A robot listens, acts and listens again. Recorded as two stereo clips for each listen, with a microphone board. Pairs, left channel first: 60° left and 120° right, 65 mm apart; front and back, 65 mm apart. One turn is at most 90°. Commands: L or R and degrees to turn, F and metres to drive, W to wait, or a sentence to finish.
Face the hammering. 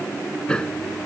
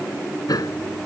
R15
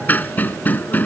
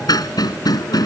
Found it: hammering, straight ahead.